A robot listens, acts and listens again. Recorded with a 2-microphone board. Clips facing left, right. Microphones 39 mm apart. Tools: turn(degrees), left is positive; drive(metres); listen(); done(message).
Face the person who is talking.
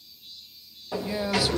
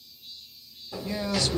turn(degrees=30)
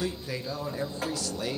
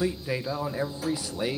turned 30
turn(degrees=-20)
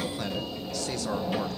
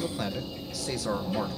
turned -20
done("Facing the man speaking, 1 to 2 m away.")